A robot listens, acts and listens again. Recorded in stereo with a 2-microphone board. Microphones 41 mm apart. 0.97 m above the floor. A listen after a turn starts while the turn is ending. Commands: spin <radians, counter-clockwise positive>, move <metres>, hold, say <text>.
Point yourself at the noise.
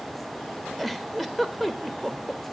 spin 0.52
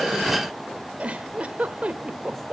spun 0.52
spin -0.52
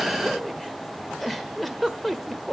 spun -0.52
say Found it: a giggle, straight ahead, 1 to 2 m away.